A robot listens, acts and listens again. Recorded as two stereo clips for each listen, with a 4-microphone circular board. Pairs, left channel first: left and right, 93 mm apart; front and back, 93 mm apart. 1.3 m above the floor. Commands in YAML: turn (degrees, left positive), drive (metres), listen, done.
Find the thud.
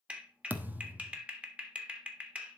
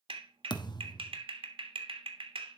turn: -25
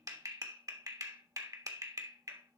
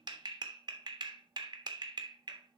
done: "Facing where the thud came from. I can't hear it now."